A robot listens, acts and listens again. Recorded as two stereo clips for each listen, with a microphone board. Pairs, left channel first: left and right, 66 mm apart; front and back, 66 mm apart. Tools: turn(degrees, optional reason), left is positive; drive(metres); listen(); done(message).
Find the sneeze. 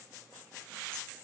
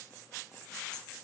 listen()
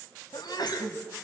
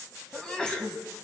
turn(degrees=75, reason="The sneeze: 75° left.")
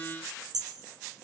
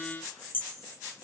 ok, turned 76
done("Facing where the sneeze came from. I can't hear it now.")